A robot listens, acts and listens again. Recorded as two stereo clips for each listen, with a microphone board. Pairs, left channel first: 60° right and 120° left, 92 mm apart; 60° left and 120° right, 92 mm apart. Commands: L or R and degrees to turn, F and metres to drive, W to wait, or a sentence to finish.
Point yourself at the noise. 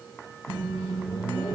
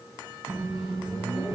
L150
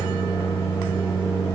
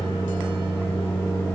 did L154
Found it: a microwave, straight ahead, 1 to 2 m away.